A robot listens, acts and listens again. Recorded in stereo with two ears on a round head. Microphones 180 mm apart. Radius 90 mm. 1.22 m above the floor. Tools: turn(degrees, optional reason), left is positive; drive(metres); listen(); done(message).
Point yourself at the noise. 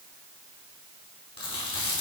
turn(degrees=25, reason="The chewing: about 25° left or 155° left.")
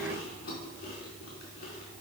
turn(degrees=130, reason="So it is at 130° left.")
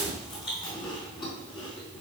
turn(degrees=25, reason="The chewing is now 25° left.")
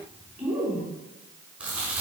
done("Found it: chewing, straight ahead, over 4 m away.")